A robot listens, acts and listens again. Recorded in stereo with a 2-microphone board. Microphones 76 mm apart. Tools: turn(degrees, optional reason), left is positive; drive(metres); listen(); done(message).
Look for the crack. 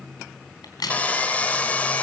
turn(degrees=60, reason="The crack: about 60° left or 120° left.")
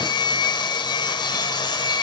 listen()
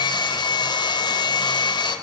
done("I heard a crack, but can't make it out now. It was about straight ahead or 60° left.")